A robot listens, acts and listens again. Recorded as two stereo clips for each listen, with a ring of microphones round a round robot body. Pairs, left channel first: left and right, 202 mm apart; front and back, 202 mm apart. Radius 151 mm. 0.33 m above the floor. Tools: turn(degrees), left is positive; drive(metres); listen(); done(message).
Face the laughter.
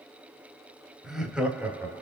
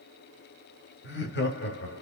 turn(degrees=-10)
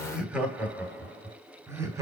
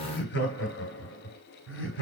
turn(degrees=-15)
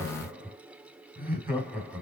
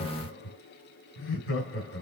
turn(degrees=-10)
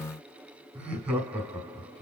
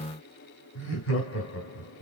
done("Facing the laughter.")